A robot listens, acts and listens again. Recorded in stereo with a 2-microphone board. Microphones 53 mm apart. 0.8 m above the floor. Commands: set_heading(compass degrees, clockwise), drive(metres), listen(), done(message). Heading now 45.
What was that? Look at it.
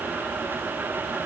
listen()
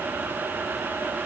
listen()
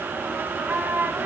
set_heading(100)
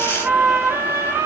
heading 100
set_heading(170)
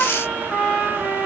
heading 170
done("Found it: a trumpet, straight ahead, over 4 m away.")